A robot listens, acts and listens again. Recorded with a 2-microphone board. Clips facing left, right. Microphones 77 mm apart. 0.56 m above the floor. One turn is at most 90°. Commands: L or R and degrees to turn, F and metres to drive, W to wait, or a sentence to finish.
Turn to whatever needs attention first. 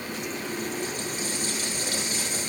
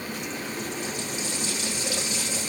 W
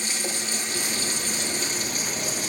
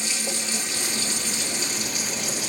W
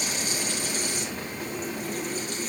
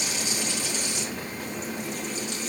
I can't make out anything urgent to turn to.